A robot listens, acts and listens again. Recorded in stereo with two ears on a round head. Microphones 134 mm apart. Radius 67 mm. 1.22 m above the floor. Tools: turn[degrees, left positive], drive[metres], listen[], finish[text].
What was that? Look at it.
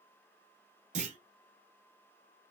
Thought: The clunk: about 45° right or 135° right.
Action: turn[-45]
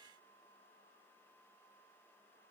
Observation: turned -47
Action: listen[]
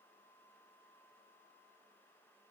Action: finish[I heard a clunk, but can't make it out now. It was about straight ahead or 90° right.]